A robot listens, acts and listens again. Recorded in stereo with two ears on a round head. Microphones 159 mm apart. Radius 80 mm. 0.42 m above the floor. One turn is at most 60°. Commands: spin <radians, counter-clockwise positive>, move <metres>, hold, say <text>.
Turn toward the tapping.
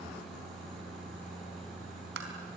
spin -1.05
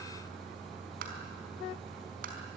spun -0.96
spin -0.96
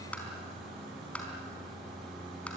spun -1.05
say Found it: tapping, straight ahead.